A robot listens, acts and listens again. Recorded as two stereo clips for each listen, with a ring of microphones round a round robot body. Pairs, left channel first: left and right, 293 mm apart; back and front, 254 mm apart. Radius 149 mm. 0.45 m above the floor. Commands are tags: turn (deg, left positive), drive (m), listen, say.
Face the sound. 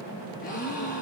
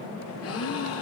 <turn deg="155"/>
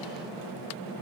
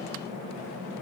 <say>Facing where the gasp came from. I can't hear it now.</say>